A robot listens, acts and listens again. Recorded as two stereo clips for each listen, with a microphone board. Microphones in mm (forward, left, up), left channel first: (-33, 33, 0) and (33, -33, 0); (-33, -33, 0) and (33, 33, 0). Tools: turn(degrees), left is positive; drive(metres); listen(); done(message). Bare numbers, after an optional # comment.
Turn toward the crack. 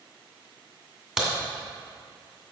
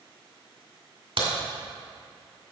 # The crack: 40° left.
turn(40)
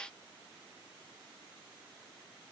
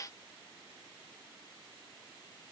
done("Facing where the crack came from. I can't hear it now.")